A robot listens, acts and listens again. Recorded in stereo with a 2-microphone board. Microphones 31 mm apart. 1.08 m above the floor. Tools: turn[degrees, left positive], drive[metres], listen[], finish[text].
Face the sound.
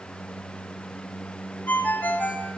Action: turn[90]
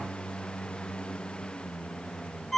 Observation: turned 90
Action: finish[Facing the ringtone, 2 to 4 m away.]